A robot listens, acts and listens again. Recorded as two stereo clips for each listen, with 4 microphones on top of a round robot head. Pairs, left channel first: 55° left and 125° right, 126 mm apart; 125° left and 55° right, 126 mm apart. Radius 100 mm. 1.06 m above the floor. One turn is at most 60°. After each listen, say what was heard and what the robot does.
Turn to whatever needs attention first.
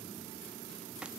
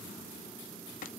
Keep listening.
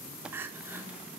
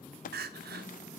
The crying: 50° right. Turn 50° right.
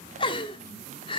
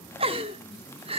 Found it: crying, straight ahead.